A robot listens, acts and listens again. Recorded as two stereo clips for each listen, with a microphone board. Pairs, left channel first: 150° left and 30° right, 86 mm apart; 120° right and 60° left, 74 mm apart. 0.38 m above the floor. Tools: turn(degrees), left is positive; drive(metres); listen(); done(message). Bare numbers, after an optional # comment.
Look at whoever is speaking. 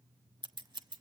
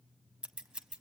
listen()
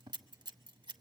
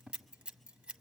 listen()
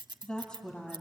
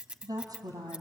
# The woman speaking: 70° left.
turn(70)
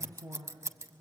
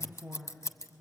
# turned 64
done("Facing the woman speaking.")